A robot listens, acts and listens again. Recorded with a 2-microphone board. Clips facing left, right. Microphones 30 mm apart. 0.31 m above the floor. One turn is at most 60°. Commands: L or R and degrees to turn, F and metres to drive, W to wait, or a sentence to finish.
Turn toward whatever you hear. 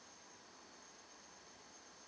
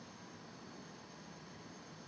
W
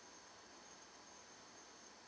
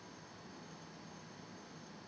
W
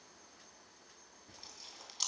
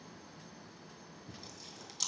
L30
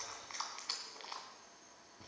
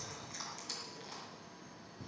L60
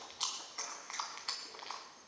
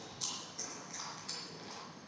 L60
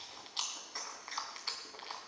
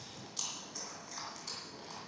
L50
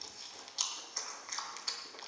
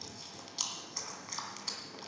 Found it: chewing, straight ahead.